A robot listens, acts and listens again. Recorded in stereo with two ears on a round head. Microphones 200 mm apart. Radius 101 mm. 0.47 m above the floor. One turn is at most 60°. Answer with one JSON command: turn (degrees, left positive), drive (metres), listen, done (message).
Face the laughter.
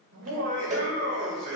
{"turn": -60}
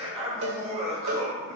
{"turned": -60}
{"turn": -30}
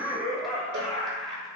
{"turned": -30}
{"done": "Facing the laughter."}